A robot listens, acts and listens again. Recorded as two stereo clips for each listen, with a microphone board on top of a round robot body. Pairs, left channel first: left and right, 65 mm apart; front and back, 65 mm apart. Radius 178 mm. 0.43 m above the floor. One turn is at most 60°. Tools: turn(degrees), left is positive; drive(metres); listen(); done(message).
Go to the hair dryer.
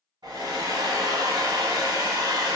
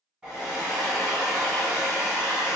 turn(degrees=-60)
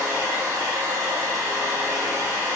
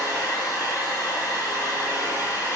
turn(degrees=-40)
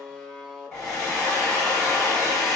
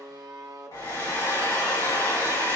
turn(degrees=10)
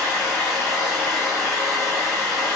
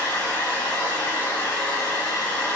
drive(metres=1.0)
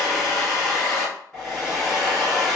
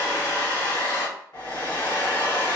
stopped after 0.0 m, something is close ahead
done("Blocked. The hair dryer is further on, straight ahead.")